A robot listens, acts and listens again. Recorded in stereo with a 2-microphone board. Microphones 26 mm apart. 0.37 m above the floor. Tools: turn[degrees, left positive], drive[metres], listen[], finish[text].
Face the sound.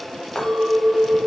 Thought: The clink: about 50° left or 130° left.
Action: turn[50]
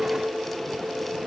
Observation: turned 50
Thought: So it is at 60° left.
Action: turn[60]
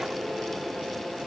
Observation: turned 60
Action: listen[]
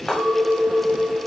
Thought: The clink is now 25° left.
Action: turn[25]
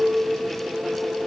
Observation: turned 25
Thought: The clink is now 10° right.
Action: turn[-10]
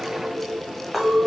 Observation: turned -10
Action: finish[Facing the clink.]